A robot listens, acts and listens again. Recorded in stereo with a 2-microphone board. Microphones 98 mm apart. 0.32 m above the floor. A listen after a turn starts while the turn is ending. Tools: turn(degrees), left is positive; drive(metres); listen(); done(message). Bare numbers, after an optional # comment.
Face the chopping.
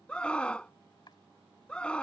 # The chopping: about 50° left or 130° left.
turn(50)
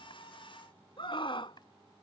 listen()
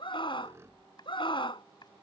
# So it is at 65° left.
turn(65)
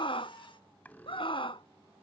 listen()
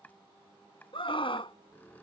# The chopping is now 20° left.
turn(20)
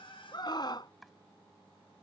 done("Found it: chopping, straight ahead.")